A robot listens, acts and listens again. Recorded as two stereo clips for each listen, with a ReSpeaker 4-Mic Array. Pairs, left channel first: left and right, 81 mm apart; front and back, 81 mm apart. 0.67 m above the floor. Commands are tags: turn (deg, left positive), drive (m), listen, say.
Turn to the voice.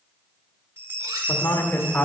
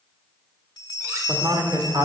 <turn deg="155"/>
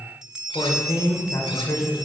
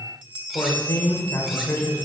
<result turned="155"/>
<turn deg="65"/>
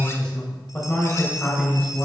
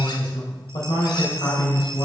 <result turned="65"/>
<turn deg="15"/>
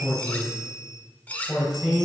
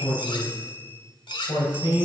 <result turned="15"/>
<say>Found it: a man speaking, straight ahead, 2 to 4 m away.</say>